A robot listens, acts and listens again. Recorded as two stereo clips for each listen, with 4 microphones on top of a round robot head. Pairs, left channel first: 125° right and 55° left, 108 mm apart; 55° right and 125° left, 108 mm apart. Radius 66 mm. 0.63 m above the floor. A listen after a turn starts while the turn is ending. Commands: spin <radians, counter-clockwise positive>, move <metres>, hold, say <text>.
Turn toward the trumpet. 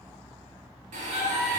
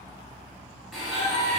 spin -3.05
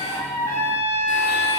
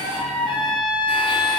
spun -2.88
spin -0.17
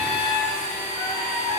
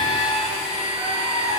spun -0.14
say Facing the trumpet.